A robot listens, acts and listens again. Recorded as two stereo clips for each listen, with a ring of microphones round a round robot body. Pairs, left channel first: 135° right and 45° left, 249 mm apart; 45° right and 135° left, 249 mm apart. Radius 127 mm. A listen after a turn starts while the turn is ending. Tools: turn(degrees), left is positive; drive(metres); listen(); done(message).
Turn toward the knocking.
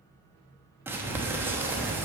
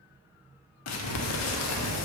listen()
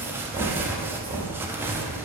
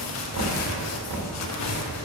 turn(degrees=115)
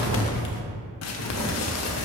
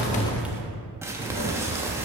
listen()
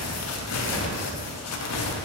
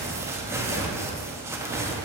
listen()
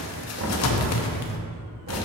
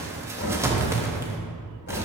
done("Facing the knocking, 1 to 2 m away.")